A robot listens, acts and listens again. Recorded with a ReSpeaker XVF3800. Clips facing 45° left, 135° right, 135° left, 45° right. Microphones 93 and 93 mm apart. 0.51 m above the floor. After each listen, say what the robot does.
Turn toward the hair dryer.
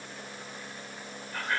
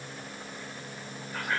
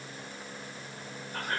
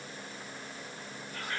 Keep listening.
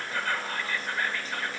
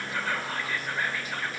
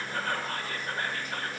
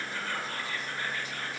Keep listening.
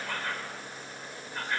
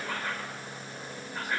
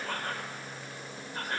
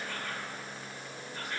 I can't make out a hair dryer to turn to.